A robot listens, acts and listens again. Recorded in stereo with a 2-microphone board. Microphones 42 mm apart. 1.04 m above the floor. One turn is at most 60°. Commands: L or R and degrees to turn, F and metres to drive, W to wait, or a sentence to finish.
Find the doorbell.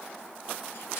W
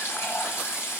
W
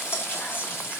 I can't make out a doorbell to turn to.